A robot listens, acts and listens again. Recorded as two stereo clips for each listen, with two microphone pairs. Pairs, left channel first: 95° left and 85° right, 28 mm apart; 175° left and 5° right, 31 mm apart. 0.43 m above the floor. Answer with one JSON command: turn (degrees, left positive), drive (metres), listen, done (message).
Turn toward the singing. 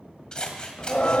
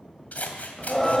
{"turn": 95}
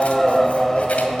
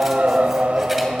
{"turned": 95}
{"turn": 20}
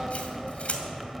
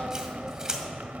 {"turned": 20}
{"done": "Facing the singing, under 1 m away."}